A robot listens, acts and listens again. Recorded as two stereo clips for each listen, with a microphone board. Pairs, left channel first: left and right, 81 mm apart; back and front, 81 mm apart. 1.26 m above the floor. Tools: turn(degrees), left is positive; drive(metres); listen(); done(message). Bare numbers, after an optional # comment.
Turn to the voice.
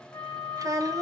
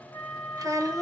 # The child speaking: 45° right.
turn(-45)
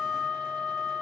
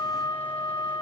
listen()
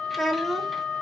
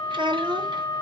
done("Facing the child speaking, under 1 m away.")